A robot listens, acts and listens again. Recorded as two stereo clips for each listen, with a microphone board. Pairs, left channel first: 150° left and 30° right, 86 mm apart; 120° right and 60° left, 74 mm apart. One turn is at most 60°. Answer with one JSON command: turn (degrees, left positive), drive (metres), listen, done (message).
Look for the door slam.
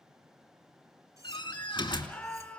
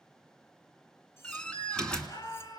{"turn": 60}
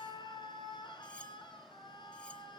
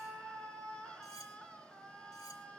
{"turn": 60}
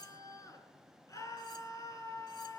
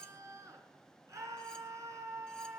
{"turn": 45}
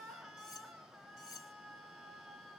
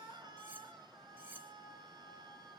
{"done": "Facing where the door slam came from. I can't hear it now."}